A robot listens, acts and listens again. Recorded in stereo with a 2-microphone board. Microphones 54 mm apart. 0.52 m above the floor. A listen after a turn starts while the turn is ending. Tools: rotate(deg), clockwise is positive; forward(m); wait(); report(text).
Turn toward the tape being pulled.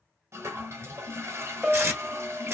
rotate(45)
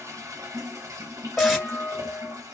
report("Facing the tape being pulled.")